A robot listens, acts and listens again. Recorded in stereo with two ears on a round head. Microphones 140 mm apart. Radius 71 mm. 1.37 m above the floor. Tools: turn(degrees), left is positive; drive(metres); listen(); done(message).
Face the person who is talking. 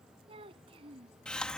turn(degrees=-35)
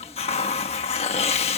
listen()
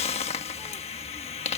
listen()
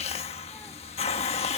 done("I heard a child speaking, but can't make it out now. It was about straight ahead or 110° right.")